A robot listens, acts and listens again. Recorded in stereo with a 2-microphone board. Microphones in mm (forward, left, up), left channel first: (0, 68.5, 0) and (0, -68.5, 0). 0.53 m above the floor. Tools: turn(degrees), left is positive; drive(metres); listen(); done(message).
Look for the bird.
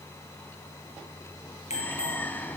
turn(degrees=30)
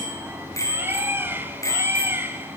turn(degrees=-15)
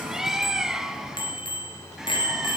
done("Found it: a bird, straight ahead, 2 to 4 m away.")